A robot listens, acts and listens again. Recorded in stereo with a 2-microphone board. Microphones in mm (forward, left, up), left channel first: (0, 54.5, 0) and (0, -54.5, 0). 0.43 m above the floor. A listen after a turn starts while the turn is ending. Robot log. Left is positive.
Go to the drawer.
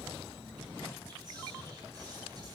cmd idle
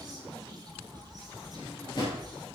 note: The drawer: about 40° left or 140° left.
cmd yaw +40
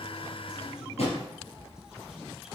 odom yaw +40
note: So it is at 100° left.
cmd yaw +100
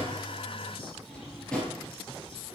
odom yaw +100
note: The drawer is now 10° left.
cmd yaw +10
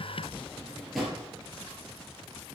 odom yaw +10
cmd fwd 1.0
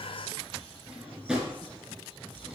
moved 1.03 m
note: The drawer is now 10° right.
cmd yaw -10
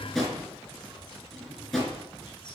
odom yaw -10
cmd fwd 1.0
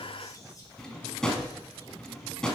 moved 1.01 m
cmd fwd 1.0
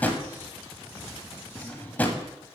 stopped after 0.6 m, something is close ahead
note: The drawer is now 15° left.
cmd yaw +15
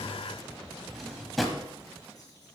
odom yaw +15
end: I am next to the drawer.